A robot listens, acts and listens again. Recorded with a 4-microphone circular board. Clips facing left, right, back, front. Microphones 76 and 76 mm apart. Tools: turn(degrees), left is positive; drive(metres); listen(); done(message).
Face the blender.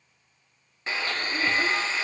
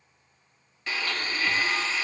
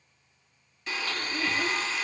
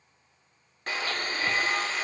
turn(degrees=30)
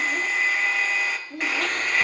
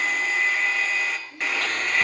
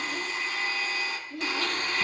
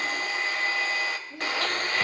done("Found it: a blender, straight ahead.")